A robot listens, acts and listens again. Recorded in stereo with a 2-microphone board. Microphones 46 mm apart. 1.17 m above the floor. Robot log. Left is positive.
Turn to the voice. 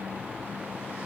cmd idle
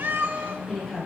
cmd yaw +30
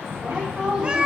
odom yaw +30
note: So it is at 15° right.
cmd yaw -15
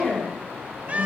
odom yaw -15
end: Found it: a woman speaking, straight ahead.